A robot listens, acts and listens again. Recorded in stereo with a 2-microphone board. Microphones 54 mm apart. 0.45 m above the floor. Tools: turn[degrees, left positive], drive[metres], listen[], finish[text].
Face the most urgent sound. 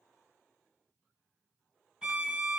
Action: listen[]
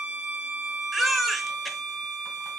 Action: turn[30]
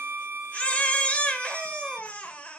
Thought: So it is at 150° left.
Action: turn[150]
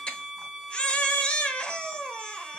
Thought: The baby crying is now 20° left.
Action: turn[20]
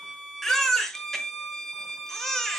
Thought: The baby crying is now 10° left.
Action: turn[10]
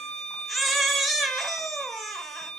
Action: finish[Facing the baby crying, under 1 m away.]